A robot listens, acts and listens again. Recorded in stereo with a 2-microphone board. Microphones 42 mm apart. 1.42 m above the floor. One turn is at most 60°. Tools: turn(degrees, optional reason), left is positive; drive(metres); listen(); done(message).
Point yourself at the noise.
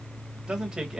turn(degrees=-30)
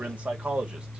turn(degrees=-60, reason="So it is at 150° right.")
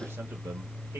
turn(degrees=-60, reason="Nothing new. It was at 90° right.")
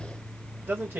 turn(degrees=-60, reason="The man speaking is now 60° right.")
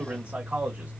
turn(degrees=-30, reason="The man speaking is now 30° right.")
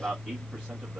done("Facing the man speaking, 1 to 2 m away.")